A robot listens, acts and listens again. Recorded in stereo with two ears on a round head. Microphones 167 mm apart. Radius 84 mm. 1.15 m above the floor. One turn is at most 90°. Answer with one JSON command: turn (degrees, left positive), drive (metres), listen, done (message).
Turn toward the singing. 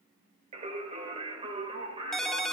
{"turn": -30}
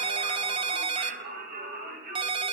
{"turn": -90}
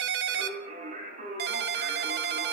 {"turn": -40}
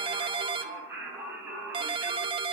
{"turn": -10}
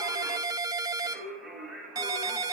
{"done": "Found it: singing, straight ahead."}